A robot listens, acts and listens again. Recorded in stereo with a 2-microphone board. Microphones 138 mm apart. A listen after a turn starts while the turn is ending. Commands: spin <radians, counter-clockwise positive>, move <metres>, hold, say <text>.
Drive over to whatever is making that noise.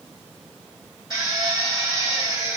spin -0.61
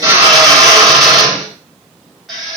move 1.0
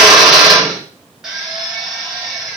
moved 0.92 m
move 1.0
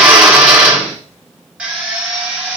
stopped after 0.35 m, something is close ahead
spin -0.26
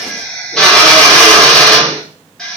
say Arrived at the drill, straight ahead.